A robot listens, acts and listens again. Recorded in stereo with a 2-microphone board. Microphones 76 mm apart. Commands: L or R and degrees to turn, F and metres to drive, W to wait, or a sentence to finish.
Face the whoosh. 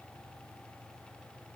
W
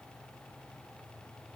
W
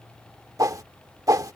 R45
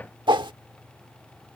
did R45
R85
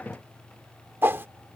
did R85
R30
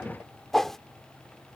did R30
Facing the whoosh.